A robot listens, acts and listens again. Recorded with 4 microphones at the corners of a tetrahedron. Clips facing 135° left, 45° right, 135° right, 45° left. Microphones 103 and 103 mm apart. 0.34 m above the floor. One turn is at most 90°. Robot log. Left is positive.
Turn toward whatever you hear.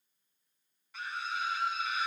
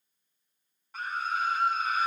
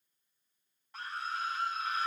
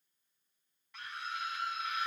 note: The scream: 85° right.
cmd yaw -85
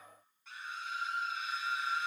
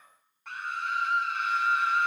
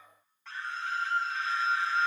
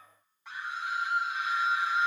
note: The scream is now 30° right.
cmd yaw -30
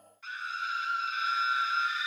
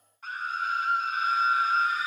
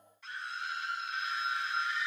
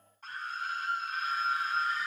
end: Found it: a scream, straight ahead, 2 to 4 m away.